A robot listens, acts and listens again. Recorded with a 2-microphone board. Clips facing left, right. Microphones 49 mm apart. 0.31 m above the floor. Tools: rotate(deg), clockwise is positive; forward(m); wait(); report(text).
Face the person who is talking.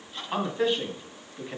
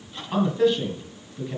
rotate(-30)
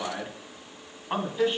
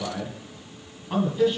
rotate(-135)
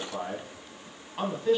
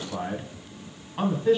rotate(10)
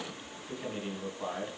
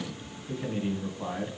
report("Found it: a man speaking, straight ahead, 1 to 2 m away.")